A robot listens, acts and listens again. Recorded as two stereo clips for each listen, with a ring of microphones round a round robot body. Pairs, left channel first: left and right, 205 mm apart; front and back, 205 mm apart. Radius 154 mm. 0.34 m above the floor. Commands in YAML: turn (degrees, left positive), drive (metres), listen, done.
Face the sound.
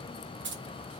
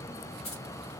turn: -65
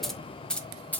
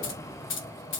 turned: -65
turn: 10
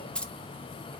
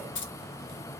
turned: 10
done: "Facing the keys jangling."